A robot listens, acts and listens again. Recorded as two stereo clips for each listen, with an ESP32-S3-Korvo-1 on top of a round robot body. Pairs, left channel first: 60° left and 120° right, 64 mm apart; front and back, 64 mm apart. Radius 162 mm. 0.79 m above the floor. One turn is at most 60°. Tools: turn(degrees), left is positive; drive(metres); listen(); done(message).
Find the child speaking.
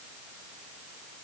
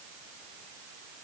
listen()
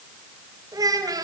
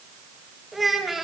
turn(degrees=-60)
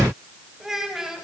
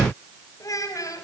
turn(degrees=-40)
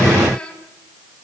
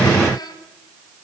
turn(degrees=-15)
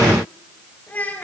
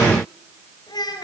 turn(degrees=-10)
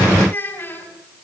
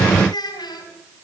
done("Facing the child speaking, over 4 m away.")